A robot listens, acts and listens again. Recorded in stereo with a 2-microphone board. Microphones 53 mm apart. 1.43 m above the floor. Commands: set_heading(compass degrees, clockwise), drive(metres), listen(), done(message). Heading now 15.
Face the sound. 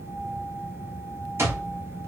set_heading(65)
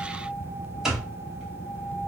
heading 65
set_heading(75)
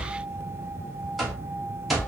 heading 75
done("Found it: an alarm clock, straight ahead, 1 to 2 m away.")